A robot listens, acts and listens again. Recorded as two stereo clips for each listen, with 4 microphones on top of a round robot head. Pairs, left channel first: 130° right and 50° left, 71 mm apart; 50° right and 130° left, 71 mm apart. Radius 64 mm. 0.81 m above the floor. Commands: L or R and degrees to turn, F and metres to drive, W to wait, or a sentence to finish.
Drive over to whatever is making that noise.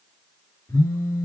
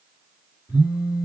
R70
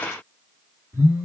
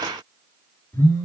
F1.0
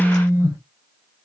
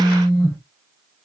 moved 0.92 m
F1.0
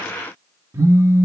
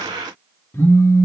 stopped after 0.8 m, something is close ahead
Arrived at the phone buzzing, straight ahead.